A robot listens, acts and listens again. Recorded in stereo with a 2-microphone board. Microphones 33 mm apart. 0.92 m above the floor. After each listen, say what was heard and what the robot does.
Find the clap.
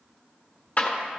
The clap: about 50° left or 130° left. Turn 50° left.
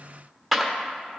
Found it: a clap, straight ahead.